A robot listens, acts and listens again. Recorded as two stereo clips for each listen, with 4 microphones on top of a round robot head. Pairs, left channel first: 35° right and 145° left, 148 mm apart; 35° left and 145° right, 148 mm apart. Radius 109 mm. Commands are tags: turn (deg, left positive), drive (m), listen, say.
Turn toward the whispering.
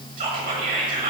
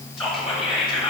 <turn deg="125"/>
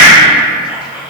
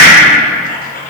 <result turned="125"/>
<listen/>
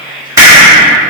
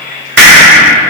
<turn deg="60"/>
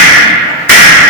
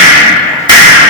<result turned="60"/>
<listen/>
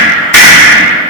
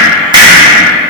<listen/>
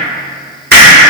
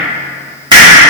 <say>Facing where the whispering came from. I can't hear it now.</say>